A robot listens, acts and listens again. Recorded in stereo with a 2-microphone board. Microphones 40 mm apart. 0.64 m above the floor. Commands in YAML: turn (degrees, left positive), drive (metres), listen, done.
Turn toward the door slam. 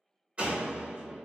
turn: -35
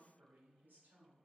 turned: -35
listen: true
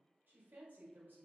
done: "I heard a door slam, but can't make it out now. It was about straight ahead or 110° right."